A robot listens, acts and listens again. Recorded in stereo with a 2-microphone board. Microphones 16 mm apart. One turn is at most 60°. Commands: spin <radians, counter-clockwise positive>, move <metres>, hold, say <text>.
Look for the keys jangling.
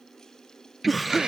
spin -0.52
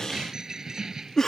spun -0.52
spin -1.05
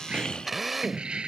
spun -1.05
spin -1.05
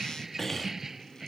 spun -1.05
spin -0.35
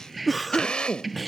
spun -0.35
say Found it: keys jangling, straight ahead.